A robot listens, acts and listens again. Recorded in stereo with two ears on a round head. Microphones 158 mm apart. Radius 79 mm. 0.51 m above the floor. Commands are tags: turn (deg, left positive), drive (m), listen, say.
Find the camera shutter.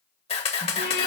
<turn deg="35"/>
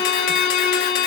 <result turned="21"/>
<listen/>
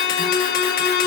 <listen/>
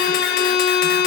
<say>I heard a camera shutter, but can't make it out now. It was about 15° left or 120° left.</say>